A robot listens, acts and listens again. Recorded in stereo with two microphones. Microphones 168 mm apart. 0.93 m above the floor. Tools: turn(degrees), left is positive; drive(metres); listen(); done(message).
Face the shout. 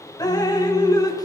listen()
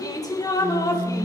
listen()
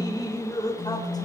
done("I can't make out a shout, only dripping and a phone buzzing.")